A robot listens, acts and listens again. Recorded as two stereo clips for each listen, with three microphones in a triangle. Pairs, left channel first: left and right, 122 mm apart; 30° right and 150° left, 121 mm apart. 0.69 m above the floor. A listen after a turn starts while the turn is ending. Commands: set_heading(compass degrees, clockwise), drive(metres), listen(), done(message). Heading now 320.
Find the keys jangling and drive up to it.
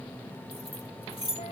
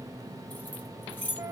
set_heading(275)
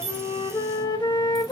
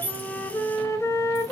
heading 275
listen()
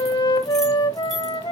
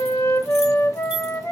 listen()
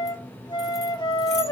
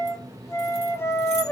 done("Facing where the keys jangling came from. I can't hear it now. I did not reach it.")